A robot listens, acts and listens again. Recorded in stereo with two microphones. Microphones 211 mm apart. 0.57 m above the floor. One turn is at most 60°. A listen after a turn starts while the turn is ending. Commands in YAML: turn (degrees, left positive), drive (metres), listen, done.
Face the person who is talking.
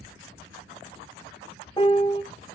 listen: true
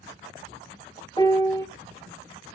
listen: true
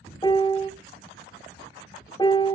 done: "I can't make out anyone speaking, only a piano."